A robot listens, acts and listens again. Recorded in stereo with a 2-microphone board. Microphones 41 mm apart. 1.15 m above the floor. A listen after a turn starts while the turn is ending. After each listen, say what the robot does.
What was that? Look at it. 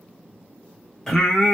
Turn 30° left.
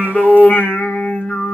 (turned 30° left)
Turn 135° left.
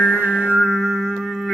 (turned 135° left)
Turn 15° left.
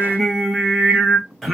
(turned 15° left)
Facing the singing, under 1 m away.